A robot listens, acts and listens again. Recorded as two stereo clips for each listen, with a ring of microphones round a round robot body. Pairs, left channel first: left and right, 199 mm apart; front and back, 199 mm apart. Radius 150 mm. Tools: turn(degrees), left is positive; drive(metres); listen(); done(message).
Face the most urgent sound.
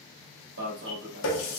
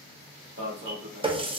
turn(degrees=-130)
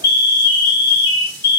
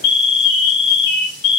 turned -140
turn(degrees=10)
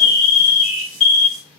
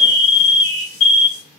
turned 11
done("Facing the alarm, 1 to 2 m away.")